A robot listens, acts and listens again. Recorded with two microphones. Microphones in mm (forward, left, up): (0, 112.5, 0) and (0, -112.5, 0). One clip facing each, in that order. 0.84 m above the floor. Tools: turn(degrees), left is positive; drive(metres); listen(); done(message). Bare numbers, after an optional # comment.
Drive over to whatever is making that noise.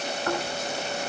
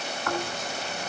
# The snoring: about 30° left or 150° left.
turn(30)
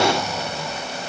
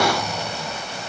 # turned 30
drive(1.0)
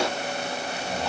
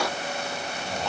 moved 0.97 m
drive(1.0)
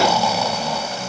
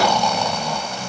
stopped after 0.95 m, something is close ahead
done("I am next to the snoring.")